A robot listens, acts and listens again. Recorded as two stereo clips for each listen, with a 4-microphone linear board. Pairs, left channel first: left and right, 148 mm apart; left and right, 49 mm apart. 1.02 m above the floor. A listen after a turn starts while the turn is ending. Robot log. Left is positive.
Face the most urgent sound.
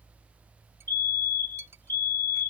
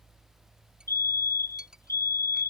note: The fire alarm: about 70° left or 110° left.
cmd yaw +70
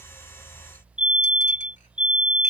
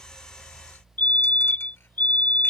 note: So it is at 35° left.
cmd yaw +35
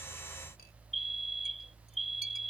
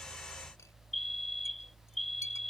end: Facing the fire alarm.